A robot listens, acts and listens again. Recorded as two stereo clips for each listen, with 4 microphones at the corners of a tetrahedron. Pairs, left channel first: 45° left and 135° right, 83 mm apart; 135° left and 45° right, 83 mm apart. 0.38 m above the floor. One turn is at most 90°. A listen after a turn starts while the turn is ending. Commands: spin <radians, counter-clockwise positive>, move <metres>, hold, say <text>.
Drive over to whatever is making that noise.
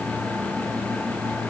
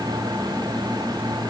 hold
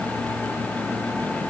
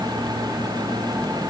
hold
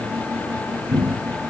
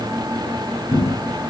spin -0.70
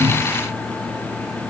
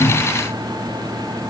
hold
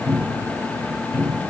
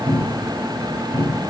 move 1.0
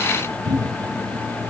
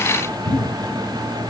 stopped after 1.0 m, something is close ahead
say I am next to the cupboard door.